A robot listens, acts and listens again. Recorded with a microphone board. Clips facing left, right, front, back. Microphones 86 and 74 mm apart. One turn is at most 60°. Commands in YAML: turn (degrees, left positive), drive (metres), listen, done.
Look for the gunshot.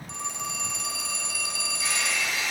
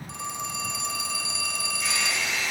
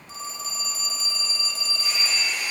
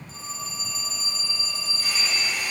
listen: true
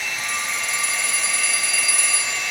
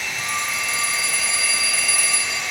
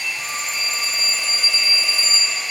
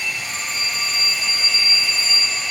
listen: true
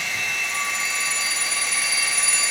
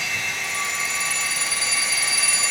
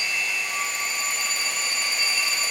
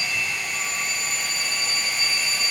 done: "I can't make out a gunshot to turn to."